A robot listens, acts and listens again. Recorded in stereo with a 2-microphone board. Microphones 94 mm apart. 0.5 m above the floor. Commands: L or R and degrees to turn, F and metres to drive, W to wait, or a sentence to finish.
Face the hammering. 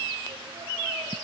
W
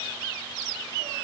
W
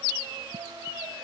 I can't make out hammering, only singing.